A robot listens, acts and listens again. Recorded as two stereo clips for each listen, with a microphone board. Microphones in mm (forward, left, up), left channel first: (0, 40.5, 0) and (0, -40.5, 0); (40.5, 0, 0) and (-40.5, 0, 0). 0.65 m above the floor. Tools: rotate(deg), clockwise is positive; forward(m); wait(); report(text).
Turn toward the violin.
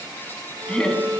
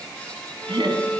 rotate(65)
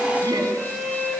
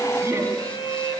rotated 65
report("Found it: a violin, straight ahead.")